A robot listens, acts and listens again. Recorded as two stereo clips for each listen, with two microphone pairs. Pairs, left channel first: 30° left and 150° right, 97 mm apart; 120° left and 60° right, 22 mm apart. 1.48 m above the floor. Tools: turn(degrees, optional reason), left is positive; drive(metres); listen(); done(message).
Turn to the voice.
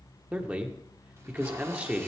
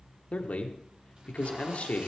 turn(degrees=135, reason="The man speaking: 135° left.")
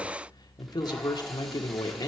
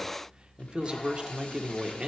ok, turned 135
turn(degrees=-15, reason="The man speaking is now 15° right.")
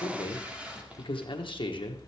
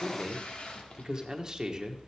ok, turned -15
done("Found it: a man speaking, straight ahead.")